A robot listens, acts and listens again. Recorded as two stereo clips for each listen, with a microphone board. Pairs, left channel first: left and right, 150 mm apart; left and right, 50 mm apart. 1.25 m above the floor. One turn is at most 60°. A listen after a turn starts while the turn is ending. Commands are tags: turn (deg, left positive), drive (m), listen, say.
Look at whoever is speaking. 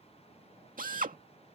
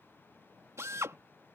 <listen/>
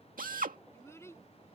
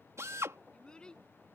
<turn deg="20"/>
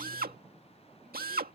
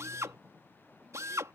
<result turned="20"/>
<listen/>
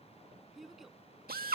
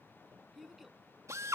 <say>Facing the child speaking.</say>